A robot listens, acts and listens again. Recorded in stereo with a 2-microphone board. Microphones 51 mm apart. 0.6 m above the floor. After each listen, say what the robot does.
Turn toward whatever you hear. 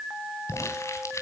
Turn 65° left.
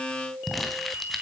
Found it: crumpling, straight ahead, 2 to 4 m away.